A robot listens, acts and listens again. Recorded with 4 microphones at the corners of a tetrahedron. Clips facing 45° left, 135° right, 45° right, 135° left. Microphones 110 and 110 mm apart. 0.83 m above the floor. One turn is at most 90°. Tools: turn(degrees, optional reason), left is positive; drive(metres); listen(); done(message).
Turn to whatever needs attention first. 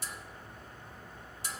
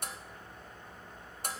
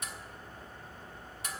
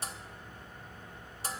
listen()
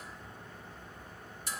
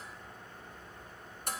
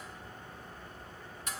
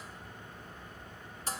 listen()
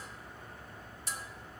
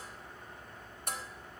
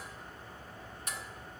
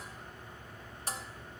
done("I can't make out anything urgent, only dishes clattering.")